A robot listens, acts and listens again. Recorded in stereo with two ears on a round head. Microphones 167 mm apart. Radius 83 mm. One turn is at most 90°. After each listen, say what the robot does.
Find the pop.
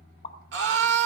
Turn 35° left.
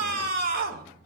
Keep listening.
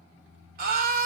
I heard a pop, but can't make it out now. It was about straight ahead or 110° left.